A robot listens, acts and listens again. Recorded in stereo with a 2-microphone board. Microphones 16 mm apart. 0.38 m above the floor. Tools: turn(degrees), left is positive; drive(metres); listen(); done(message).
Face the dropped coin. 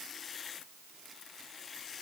listen()
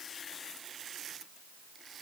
listen()
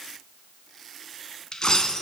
turn(degrees=55)
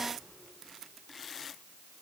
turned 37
listen()
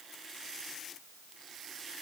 done("I heard a dropped coin, but can't make it out now. It was about 15° left or 90° left.")